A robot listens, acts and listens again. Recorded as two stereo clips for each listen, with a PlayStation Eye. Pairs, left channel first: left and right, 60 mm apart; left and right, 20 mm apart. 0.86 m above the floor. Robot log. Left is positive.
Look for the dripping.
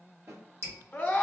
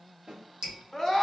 note: The dripping: about 45° right or 135° right.
cmd yaw -45
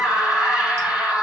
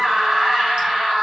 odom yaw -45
cmd idle
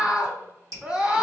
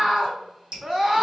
note: So it is at 80° right.
cmd yaw -80
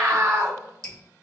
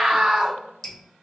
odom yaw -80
note: The dripping is now 15° left.
cmd yaw +15
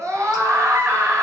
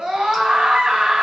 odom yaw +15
cmd idle
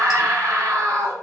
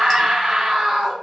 cmd idle
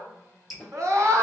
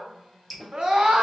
end: Found it: dripping, straight ahead, 1 to 2 m away.